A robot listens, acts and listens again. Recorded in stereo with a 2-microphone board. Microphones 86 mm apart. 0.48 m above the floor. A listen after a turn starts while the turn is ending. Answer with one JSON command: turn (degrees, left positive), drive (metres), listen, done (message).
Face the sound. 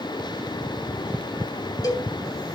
{"turn": 50}
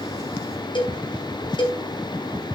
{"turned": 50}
{"turn": 80}
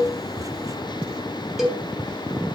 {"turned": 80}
{"done": "Found it: a cowbell, straight ahead."}